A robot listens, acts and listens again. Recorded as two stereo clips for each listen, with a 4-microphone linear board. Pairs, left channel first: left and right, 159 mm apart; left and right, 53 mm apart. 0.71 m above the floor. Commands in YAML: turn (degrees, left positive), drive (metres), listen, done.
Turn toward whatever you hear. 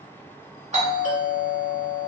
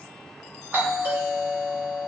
turn: -50
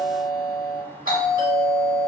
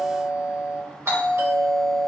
turn: -75
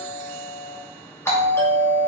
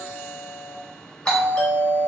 turn: 20
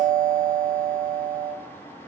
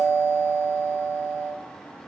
done: "Found it: a doorbell, straight ahead, 1 to 2 m away."